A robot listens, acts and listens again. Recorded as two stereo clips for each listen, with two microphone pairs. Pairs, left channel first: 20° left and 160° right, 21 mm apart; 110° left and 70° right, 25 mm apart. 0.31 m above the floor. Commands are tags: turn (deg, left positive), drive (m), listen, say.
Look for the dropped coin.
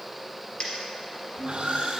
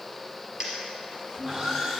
<turn deg="-10"/>
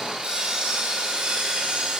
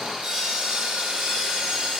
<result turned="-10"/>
<say>Facing where the dropped coin came from. I can't hear it now.</say>